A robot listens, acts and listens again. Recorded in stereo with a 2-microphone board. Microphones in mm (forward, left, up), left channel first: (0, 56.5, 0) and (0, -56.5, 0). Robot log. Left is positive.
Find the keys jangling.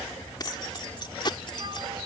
note: The keys jangling: about 45° left or 135° left.
cmd yaw +45
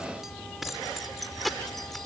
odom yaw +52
end: Facing the keys jangling.